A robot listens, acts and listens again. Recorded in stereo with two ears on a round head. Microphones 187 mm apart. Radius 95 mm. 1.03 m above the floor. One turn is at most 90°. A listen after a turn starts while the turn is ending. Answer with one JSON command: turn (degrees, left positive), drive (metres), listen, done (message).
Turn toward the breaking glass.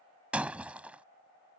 {"turn": -30}
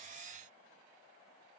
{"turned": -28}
{"listen": true}
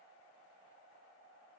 {"done": "I heard breaking glass, but can't make it out now. It was about 20° left or 145° right."}